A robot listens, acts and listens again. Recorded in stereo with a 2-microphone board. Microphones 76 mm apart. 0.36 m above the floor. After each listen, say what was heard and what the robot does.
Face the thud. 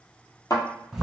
The thud: about 50° left or 130° left. Turn 50° left.
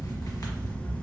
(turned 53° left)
Keep listening.
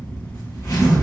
I heard a thud, but can't make it out now. It was about 5° right or 75° left.